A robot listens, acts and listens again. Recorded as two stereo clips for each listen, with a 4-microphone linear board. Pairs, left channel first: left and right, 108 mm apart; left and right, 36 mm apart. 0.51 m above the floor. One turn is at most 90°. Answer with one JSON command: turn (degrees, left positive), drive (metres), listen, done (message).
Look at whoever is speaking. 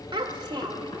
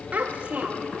{"turn": -45}
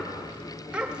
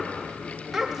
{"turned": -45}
{"turn": -10}
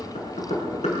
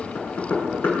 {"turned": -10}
{"listen": true}
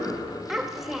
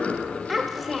{"done": "Found it: a child speaking, straight ahead, 1 to 2 m away."}